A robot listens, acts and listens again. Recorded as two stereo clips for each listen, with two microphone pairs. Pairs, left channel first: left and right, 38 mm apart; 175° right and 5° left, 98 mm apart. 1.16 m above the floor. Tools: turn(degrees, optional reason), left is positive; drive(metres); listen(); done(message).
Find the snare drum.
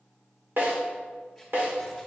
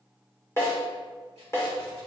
turn(degrees=-115, reason="The snare drum: 115° right.")
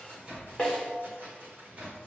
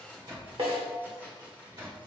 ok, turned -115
turn(degrees=10, reason="The snare drum is now 10° left.")
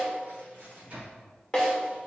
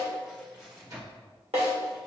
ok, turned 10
done("Found it: a snare drum, straight ahead, 2 to 4 m away.")